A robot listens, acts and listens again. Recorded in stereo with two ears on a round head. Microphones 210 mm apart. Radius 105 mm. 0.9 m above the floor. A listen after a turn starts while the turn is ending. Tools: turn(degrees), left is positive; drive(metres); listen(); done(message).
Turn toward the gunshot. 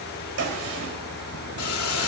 turn(degrees=-70)
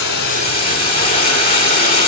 listen()
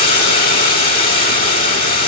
done("I heard a gunshot, but can't make it out now. It was about straight ahead or 40° right.")